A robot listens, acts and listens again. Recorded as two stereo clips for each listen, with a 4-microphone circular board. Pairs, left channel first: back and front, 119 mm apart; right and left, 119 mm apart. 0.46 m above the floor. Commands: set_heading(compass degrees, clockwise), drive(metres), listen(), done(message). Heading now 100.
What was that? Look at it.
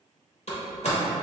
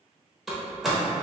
set_heading(280)
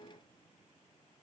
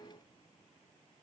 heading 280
done("I heard a door slam from this way, but can't make it out now.")